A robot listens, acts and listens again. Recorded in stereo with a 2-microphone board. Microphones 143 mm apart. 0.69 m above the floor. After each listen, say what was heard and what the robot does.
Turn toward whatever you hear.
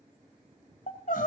Turn 90° left.
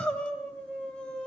Found it: crying, straight ahead, 2 to 4 m away.